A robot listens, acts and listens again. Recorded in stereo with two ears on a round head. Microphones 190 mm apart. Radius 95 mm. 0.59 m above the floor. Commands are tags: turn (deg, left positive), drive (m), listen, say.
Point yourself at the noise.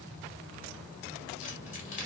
<turn deg="35"/>
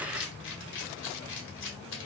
<turn deg="105"/>
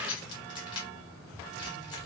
<turn deg="25"/>
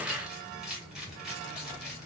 <say>Facing the keys jangling.</say>